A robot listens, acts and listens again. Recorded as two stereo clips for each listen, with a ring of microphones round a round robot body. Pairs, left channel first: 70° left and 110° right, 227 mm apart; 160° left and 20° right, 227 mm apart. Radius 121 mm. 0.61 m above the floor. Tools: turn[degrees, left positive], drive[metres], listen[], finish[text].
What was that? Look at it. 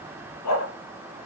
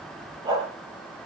Thought: The dog barking: 50° left.
Action: turn[50]
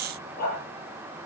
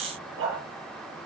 Thought: The dog barking is now 15° left.
Action: turn[15]
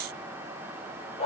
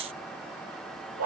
Action: finish[Facing the dog barking.]